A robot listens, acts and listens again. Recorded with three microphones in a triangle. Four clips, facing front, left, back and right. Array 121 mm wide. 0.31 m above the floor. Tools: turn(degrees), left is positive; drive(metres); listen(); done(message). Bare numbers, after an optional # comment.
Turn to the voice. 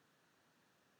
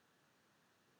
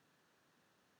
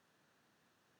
listen()
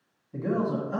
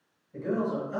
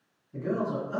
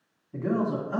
# The man speaking: 70° right.
turn(-70)
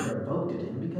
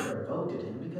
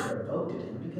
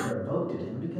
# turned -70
# The man speaking is now 20° right.
turn(-20)
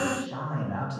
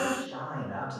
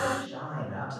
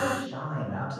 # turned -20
done("Found it: a man speaking, straight ahead.")